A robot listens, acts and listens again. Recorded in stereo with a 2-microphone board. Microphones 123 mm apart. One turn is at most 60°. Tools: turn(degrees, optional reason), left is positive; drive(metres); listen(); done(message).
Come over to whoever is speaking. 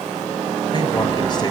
listen()
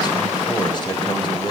turn(degrees=35, reason="The man speaking: about 35° left or 145° left.")
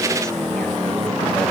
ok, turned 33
listen()
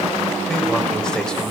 drive(metres=1.0)
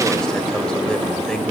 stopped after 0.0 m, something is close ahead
listen()
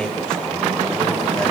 done("Blocked. The man speaking is further on, straight ahead.")